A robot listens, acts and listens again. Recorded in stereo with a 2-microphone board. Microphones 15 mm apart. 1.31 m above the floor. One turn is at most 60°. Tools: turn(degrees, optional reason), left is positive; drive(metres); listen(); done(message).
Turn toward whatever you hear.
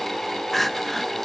turn(degrees=30)
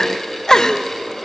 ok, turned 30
turn(degrees=60, reason="So it is at 140° left.")
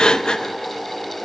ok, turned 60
turn(degrees=60, reason="The crying is now 85° left.")
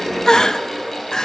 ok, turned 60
turn(degrees=50, reason="The crying is now 50° left.")
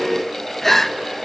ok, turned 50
turn(degrees=25, reason="The crying is now 25° left.")
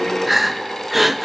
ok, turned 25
done("Found it: crying, straight ahead.")